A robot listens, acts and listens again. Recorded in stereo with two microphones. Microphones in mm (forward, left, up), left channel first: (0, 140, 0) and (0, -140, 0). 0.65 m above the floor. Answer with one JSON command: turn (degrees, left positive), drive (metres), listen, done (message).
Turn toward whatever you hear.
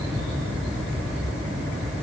{"listen": true}
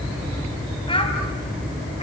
{"turn": 20}
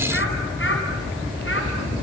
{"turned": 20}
{"turn": 135}
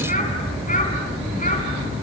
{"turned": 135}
{"turn": 30}
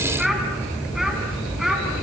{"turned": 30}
{"done": "Facing the child speaking."}